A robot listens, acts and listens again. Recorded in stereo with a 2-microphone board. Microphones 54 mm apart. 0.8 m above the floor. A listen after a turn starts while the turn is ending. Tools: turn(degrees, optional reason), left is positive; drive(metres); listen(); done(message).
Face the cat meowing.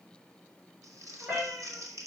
turn(degrees=-35, reason="The cat meowing: about 35° right or 145° right.")
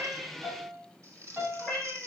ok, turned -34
done("Facing the cat meowing.")